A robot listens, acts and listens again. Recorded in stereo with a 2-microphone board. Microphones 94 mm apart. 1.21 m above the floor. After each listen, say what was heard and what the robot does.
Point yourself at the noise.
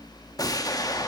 The explosion: about 40° left or 140° left. Turn 40° left.
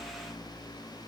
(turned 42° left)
Keep listening.
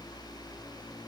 I heard an explosion, but can't make it out now. It was about straight ahead or 100° left.